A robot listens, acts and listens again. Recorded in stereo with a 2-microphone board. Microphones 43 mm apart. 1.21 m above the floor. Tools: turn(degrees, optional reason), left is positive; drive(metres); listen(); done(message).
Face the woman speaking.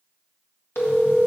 listen()
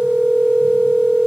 listen()
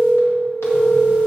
done("I can't make out a woman speaking to turn to.")